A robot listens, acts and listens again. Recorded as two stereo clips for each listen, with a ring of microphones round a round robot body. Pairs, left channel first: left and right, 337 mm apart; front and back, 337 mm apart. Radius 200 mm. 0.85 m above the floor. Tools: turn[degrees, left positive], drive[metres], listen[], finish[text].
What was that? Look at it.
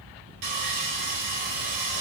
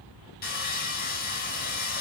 Thought: The sawing: 65° right.
Action: turn[-65]
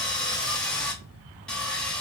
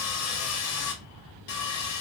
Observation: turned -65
Action: finish[Found it: sawing, straight ahead.]